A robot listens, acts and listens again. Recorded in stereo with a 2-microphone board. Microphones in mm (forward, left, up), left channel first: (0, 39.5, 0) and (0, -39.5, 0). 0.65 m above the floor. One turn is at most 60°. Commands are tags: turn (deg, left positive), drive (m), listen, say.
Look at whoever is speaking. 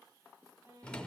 <listen/>
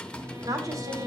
<turn deg="-50"/>
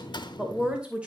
<turn deg="-15"/>
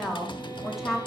<say>Found it: a woman speaking, straight ahead, 2 to 4 m away.</say>